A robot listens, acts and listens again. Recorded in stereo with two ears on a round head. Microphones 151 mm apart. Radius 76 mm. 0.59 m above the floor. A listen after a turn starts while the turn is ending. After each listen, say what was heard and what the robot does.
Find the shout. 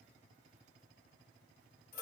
Keep listening.
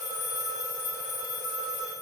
Keep listening.
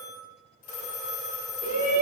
The shout: about 55° right or 125° right. Turn 55° right.
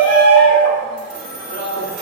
So it is at 65° right. Turn 65° right.
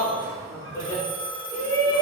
The shout is now 15° left. Turn 15° left.
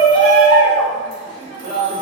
Facing the shout, 1 to 2 m away.